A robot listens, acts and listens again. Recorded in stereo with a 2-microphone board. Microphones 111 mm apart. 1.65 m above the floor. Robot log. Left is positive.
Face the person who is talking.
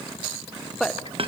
cmd yaw +30
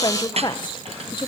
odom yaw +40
note: So it is at 135° left.
cmd yaw +135
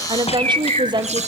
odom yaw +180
note: The woman speaking is now 45° right.
cmd yaw -45
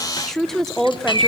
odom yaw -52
end: Facing the woman speaking.